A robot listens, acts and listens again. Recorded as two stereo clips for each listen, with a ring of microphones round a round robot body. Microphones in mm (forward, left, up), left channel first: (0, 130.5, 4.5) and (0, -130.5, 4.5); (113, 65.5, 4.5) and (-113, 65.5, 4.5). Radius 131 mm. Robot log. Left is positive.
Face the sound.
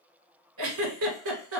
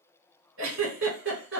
note: The giggle: 130° right.
cmd yaw -130
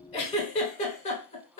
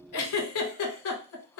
note: The giggle is now 25° left.
cmd yaw +25
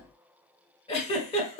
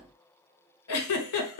note: The giggle is now 20° left.
cmd yaw +20
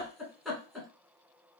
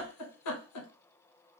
end: Facing the giggle, under 1 m away.